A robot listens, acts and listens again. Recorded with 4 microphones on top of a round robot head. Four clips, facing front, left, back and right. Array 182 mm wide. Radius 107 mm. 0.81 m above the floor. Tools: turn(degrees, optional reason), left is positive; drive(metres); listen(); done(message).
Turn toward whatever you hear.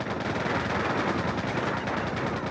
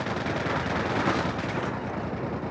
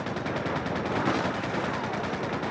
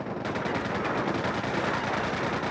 listen()
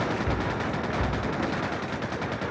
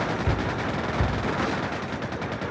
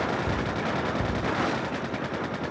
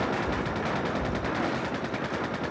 turn(degrees=100, reason="The cupboard door: 100° left.")
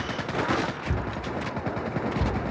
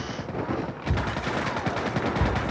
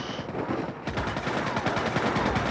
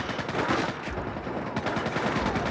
turn(degrees=55, reason="The cupboard door is now 55° left.")
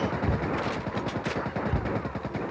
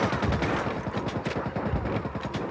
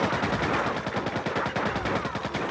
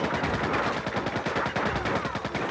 turn(degrees=10, reason="The cupboard door is now 10° left.")
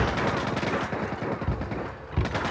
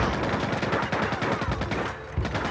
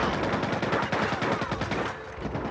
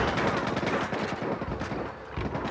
done("Found it: a cupboard door, straight ahead, over 4 m away.")